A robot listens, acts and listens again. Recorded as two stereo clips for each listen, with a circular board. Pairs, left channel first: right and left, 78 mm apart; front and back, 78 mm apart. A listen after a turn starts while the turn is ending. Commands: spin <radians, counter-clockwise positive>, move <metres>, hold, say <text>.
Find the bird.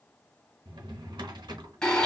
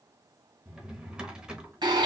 hold
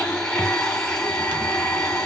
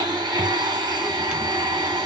hold
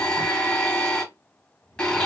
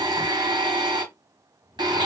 say I can't make out a bird, only a blender and a drawer.